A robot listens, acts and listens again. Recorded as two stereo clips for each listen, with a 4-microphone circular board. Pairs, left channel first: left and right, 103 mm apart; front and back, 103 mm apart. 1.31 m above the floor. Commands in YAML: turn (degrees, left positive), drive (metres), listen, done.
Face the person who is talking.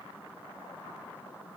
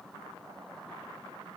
listen: true
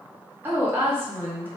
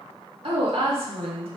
turn: -160
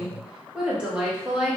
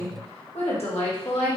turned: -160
turn: -10
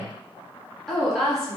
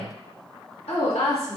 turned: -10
done: "Found it: a woman speaking, straight ahead, 1 to 2 m away."